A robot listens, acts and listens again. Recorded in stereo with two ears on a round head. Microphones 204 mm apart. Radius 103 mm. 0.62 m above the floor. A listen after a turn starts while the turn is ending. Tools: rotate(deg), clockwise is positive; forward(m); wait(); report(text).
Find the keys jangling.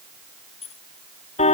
rotate(-30)
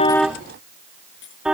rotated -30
rotate(-125)
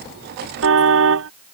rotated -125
wait()
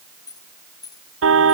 rotate(-15)
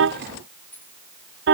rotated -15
rotate(-10)
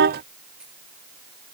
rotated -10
wait()
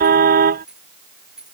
report("Found it: keys jangling, straight ahead.")